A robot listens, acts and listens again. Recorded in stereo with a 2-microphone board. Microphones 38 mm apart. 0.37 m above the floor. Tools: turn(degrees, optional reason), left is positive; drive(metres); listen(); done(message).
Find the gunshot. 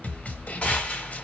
turn(degrees=30, reason="The gunshot: about 30° left or 150° left.")
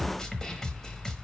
listen()
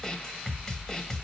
done("I heard a gunshot, but can't make it out now. It was about straight ahead or 120° left.")